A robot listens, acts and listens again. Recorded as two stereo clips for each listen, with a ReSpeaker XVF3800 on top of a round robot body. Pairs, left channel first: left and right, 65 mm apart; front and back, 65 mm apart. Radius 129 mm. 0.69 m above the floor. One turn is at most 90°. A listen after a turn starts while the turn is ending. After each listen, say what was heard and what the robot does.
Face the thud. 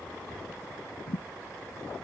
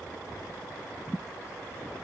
The thud: 85° left. Turn 85° left.
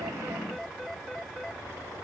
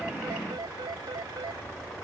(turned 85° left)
Facing where the thud came from. I can't hear it now.